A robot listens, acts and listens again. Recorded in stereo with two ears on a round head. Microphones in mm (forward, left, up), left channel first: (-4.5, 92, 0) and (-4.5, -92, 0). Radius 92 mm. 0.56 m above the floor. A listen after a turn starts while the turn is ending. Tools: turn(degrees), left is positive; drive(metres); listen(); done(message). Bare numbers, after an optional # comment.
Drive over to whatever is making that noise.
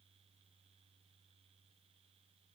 listen()
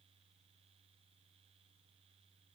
listen()
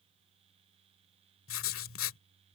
# The writing: about 70° left or 110° left.
turn(70)
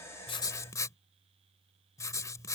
# So it is at 15° left.
turn(15)
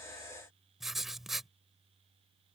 drive(1.0)
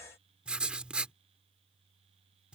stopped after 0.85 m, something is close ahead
done("I am next to the writing.")